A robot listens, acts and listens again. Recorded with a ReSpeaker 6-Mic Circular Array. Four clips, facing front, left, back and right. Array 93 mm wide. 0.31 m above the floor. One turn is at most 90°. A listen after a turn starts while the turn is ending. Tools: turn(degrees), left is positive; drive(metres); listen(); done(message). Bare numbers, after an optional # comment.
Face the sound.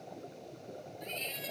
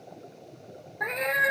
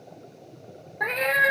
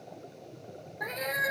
# The cat meowing: 160° left.
turn(90)
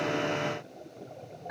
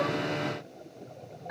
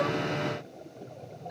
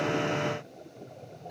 # The cat meowing is now 55° left.
turn(55)
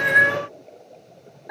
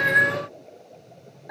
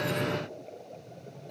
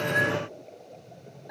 # The cat meowing is now 20° left.
turn(20)
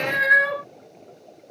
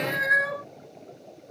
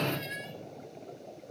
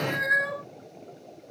done("Found it: a cat meowing, straight ahead.")